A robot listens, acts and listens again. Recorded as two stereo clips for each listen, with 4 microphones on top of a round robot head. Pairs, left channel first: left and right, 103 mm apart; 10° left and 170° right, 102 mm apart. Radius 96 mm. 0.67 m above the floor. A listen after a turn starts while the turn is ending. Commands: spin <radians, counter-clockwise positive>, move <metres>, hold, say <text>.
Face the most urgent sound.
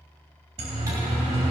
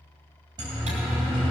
spin -2.09
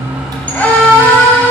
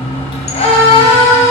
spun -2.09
spin 0.26
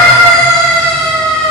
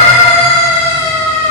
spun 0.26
say Facing the siren.